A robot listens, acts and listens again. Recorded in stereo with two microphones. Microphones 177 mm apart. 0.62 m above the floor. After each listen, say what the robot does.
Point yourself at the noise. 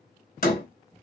Turn 55° left.
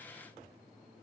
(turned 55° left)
Keep listening.
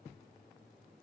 I heard a door slam, but can't make it out now. It was about straight ahead or 70° left.